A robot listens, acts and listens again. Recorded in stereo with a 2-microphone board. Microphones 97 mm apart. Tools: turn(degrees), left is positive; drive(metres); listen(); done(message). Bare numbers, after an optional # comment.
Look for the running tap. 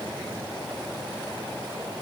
listen()
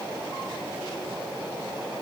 listen()
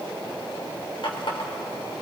# The running tap: about 60° left or 120° left.
turn(60)
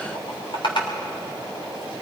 # So it is at 60° left.
turn(60)
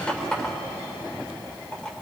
# The running tap is now 10° left.
turn(10)
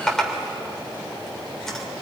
done("Facing the running tap, 2 to 4 m away.")